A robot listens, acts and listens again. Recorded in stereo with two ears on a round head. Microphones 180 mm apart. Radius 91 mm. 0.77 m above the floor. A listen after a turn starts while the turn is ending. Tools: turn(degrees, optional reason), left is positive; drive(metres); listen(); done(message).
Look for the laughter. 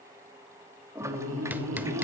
turn(degrees=-65, reason="The laughter: about 65° right or 115° right.")
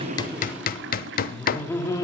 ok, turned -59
turn(degrees=15, reason="So it is at 15° left.")
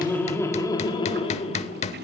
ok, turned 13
turn(degrees=35, reason="The laughter is now 35° left.")
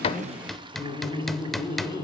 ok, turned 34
turn(degrees=20, reason="The laughter is now 20° left.")
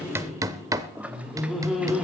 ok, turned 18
done("Found it: laughter, straight ahead.")